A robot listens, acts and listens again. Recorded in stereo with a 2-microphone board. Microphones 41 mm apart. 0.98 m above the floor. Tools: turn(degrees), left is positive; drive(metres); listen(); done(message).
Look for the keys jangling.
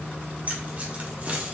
turn(degrees=-30)
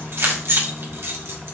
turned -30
turn(degrees=-115)
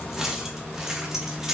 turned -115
turn(degrees=-10)
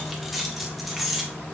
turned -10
done("Found it: keys jangling, straight ahead.")